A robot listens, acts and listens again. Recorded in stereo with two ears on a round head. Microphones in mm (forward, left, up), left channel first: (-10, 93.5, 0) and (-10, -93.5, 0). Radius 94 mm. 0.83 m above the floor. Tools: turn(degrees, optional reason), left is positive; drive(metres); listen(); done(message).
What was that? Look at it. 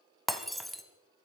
turn(degrees=30)
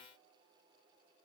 listen()
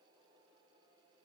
done("I heard breaking glass, but can't make it out now. It was about 30° right or 150° left.")